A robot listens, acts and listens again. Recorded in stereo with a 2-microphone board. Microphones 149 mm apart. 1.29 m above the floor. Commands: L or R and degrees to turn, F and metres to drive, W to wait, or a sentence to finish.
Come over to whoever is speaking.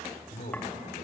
L60
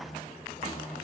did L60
L60
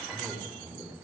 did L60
F1.0
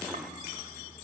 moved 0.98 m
W
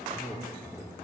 F1.0
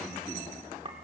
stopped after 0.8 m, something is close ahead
W
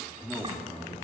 Blocked. The man speaking is further on, straight ahead.